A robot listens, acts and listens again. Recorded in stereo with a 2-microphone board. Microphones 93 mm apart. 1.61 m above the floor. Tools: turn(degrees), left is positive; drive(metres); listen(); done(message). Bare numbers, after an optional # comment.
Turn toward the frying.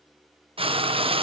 turn(-90)
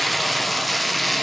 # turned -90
done("Facing the frying, 1 to 2 m away.")